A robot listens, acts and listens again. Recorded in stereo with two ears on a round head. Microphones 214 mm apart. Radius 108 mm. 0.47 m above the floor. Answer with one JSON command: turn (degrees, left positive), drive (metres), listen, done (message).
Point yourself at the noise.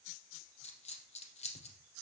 {"turn": 30}
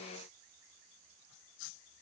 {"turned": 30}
{"listen": true}
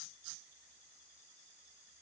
{"done": "I heard a dropped coin, but can't make it out now. It was about straight ahead or 120° left."}